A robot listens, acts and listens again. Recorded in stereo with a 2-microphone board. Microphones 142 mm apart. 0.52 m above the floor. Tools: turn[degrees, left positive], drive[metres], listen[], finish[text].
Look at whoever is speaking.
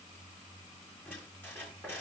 Action: listen[]
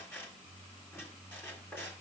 Action: listen[]
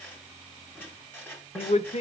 Thought: The man speaking: about 60° left or 120° left.
Action: turn[60]
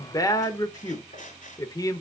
Thought: So it is at 30° left.
Action: turn[30]
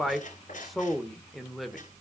Action: finish[Facing the man speaking, 1 to 2 m away.]